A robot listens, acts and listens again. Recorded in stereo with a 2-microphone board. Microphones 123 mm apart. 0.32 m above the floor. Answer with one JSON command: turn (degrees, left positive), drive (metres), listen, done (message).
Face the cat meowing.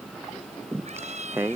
{"turn": -65}
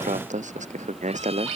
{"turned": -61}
{"listen": true}
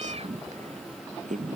{"turn": -55}
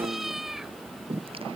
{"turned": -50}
{"done": "Found it: a cat meowing, straight ahead."}